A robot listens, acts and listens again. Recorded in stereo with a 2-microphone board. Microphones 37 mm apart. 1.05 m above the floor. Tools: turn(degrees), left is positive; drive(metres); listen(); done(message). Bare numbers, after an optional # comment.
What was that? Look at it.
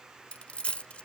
# The dropped coin: about 30° left or 150° left.
turn(30)
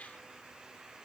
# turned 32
listen()
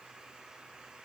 done("I heard a dropped coin, but can't make it out now. It was about straight ahead or 115° left.")